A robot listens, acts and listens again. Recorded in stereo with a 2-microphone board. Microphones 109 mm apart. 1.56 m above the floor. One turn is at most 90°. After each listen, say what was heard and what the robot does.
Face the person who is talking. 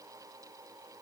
Keep listening.
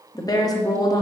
The woman speaking: about 35° left or 145° left. Turn 35° left.
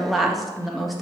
Found it: a woman speaking, straight ahead.